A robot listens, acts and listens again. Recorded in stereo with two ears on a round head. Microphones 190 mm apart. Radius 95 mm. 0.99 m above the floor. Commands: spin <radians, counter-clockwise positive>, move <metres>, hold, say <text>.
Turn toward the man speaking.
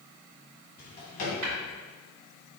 hold
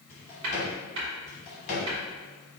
hold
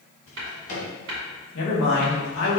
spin 1.05
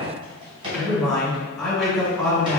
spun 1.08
say Facing the man speaking, 1 to 2 m away.